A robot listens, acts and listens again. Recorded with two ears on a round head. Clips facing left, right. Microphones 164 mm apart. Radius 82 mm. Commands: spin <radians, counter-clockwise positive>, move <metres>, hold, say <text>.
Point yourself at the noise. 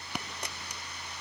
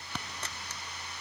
spin 0.52
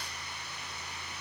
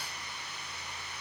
hold
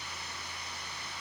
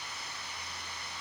say I heard a dropped coin, but can't make it out now. It was about 20° right or 140° left.